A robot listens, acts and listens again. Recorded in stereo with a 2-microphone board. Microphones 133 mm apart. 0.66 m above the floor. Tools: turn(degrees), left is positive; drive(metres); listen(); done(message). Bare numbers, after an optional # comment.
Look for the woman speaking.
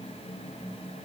listen()
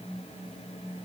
listen()
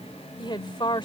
# The woman speaking: about 35° left or 145° left.
turn(35)
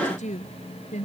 # So it is at 110° left.
turn(110)
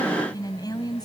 # The woman speaking is now 30° left.
turn(30)
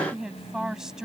done("Facing the woman speaking.")